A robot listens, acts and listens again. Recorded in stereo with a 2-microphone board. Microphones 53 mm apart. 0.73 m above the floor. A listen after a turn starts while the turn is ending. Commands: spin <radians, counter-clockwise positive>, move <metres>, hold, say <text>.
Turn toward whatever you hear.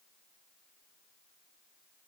hold
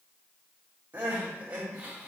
spin -0.52
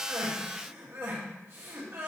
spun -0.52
spin -2.09
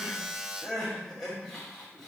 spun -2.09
spin 0.17
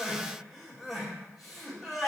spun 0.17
say Facing the crying, 1 to 2 m away.